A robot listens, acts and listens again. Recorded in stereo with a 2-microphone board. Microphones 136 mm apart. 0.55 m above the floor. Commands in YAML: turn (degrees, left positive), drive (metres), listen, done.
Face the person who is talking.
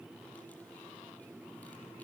listen: true
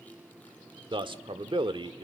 turn: -35
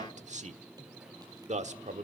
turn: -95
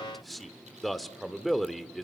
done: "Found it: a man speaking, straight ahead, 1 to 2 m away."